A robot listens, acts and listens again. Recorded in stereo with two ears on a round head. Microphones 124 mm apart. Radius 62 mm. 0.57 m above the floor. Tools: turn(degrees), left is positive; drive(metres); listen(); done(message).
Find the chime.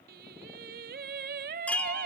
turn(degrees=30)
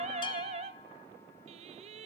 listen()
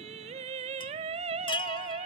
turn(degrees=140)
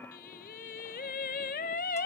listen()
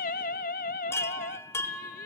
turn(degrees=20)
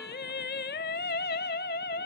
listen()
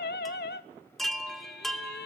done("Facing the chime, 1 to 2 m away.")